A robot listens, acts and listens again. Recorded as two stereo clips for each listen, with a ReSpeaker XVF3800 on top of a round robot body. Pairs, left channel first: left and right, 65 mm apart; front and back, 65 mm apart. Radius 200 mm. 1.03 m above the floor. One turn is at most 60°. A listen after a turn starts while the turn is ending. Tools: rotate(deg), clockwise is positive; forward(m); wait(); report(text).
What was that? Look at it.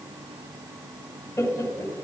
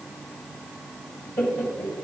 rotate(-45)
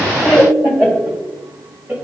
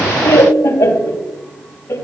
rotate(25)
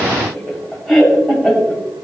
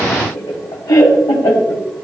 report("Found it: laughter, straight ahead.")